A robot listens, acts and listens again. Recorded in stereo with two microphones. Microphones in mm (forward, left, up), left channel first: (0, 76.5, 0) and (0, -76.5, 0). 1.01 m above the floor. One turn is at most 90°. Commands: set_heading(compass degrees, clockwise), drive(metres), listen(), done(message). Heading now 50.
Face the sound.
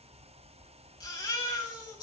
set_heading(25)
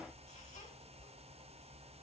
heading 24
listen()
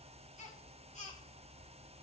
set_heading(294)
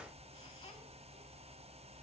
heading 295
set_heading(255)
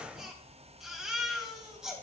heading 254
done("Facing the baby crying.")